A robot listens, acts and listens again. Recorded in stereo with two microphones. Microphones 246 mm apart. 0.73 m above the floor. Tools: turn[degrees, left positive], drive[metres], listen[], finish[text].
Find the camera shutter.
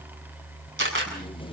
Thought: The camera shutter: about 55° right or 125° right.
Action: turn[-55]
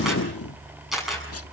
Action: finish[Found it: a camera shutter, straight ahead, over 4 m away.]